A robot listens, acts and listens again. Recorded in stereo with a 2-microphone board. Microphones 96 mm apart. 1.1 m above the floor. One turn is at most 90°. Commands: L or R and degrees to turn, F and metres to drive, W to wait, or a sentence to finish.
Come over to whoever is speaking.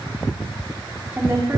R25
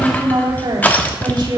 R90
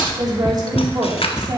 R50
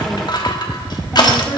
W
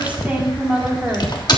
R15
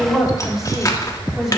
F1.0
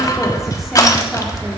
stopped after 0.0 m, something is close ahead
W
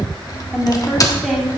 Something is in my way. I am facing the woman speaking but have not reached it.